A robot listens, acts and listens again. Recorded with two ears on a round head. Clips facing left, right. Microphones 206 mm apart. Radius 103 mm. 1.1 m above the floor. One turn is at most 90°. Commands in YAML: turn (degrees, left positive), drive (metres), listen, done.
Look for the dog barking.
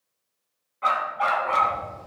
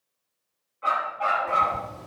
turn: 70
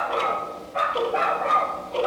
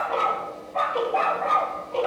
done: "Found it: a dog barking, straight ahead."